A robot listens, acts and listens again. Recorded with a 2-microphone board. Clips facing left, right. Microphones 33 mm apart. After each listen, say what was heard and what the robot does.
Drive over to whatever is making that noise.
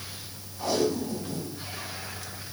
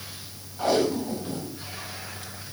The tape being pulled: about 45° right or 135° right. Turn 45° right.
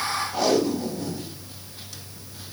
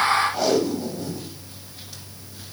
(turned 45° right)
Drive 1.0 m forward.
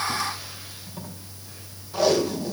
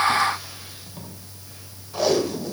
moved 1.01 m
Drive 1.0 m forward.
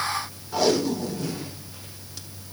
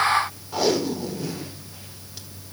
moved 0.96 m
Drive 1.0 m forward.
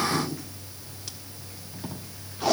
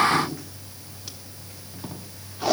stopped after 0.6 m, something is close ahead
The tape being pulled is now 10° right. Turn 10° right.
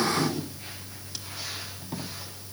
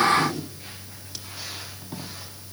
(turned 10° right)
I am next to the tape being pulled.